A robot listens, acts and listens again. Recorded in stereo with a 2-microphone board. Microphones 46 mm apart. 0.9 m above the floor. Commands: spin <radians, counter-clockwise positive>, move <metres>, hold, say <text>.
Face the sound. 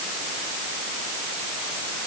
hold
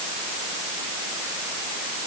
hold
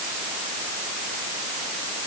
say I can't make out anything to turn to.